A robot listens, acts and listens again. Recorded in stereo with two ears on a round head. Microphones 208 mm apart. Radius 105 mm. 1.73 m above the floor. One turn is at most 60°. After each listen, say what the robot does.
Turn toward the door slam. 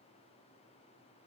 Keep listening.
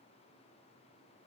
Keep listening.
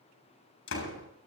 Turn 60° left.
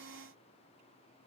Keep listening.
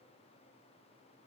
I heard a door slam, but can't make it out now. It was about straight ahead or 60° left.